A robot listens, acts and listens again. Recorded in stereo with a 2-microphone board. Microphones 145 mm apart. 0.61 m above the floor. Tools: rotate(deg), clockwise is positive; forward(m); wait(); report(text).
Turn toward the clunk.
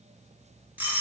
wait()
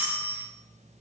wait()
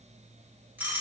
report("I can't make out a clunk, only a doorbell.")